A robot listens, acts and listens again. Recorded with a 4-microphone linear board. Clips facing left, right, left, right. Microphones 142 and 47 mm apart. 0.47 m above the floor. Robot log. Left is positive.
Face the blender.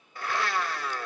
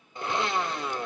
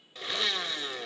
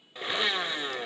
note: The blender: about 20° right or 160° right.
cmd yaw -20
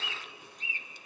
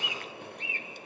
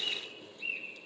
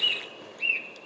cmd idle
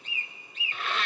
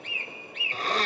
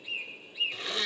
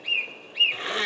note: So it is at 140° right.
cmd yaw -140
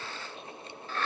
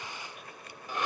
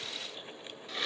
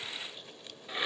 note: The blender is now 15° right.
cmd yaw -15
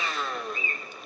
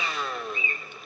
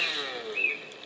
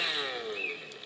end: Found it: a blender, straight ahead, under 1 m away.